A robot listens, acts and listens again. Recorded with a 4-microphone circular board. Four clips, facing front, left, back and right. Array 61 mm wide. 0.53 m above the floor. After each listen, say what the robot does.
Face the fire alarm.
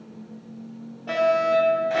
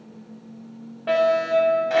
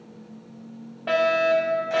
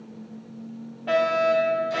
Turn 150° left.
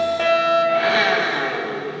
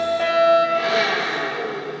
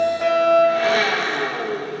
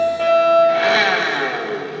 Facing the fire alarm.